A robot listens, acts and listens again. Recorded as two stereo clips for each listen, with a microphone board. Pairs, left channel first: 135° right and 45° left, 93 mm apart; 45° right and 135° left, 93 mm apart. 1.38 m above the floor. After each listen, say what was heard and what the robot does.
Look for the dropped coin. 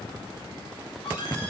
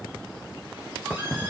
Keep listening.
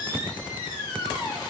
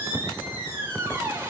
Keep listening.
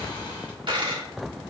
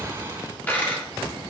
The dropped coin: 25° left. Turn 25° left.
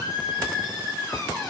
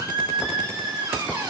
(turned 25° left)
I heard a dropped coin from this way, but can't make it out now.